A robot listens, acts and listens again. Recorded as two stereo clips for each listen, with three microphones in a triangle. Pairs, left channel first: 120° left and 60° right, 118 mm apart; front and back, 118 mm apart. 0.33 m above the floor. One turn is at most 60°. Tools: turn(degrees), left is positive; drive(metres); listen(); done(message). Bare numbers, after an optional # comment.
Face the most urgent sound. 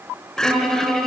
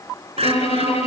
# The crying: 155° right.
turn(-60)
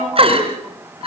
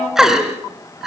# The crying is now 95° right.
turn(-60)
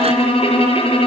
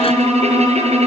# Nothing new. It was at 35° right.
turn(-35)
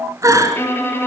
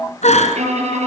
done("Found it: crying, straight ahead.")